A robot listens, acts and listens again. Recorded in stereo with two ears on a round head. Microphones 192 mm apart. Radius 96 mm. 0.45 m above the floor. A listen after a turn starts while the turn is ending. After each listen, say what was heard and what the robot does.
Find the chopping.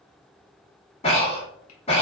Keep listening.
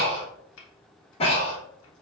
The chopping: about 70° left or 110° left. Turn 70° left.
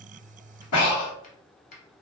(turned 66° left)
So it is at 35° left. Turn 35° left.
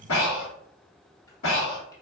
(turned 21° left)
Nothing new. It was at 15° left. Turn 15° left.
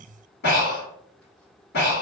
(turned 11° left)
Keep listening.
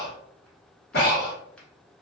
I heard chopping from this way, but can't make it out now.